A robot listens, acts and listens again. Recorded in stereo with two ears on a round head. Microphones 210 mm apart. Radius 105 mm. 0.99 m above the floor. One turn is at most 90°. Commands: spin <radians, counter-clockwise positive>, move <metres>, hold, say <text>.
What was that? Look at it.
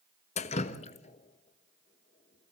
spin 0.52
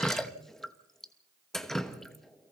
say Facing the dripping, under 1 m away.